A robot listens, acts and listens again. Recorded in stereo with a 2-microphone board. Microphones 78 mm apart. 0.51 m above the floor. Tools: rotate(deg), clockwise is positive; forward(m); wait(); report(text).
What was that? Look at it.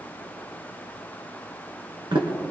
rotate(90)
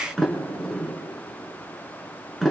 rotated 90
report("Facing the sliding door.")